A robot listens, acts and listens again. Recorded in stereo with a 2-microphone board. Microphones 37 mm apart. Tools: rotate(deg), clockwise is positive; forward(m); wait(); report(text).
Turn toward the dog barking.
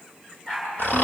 rotate(-20)
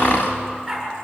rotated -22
report("Facing the dog barking, over 4 m away.")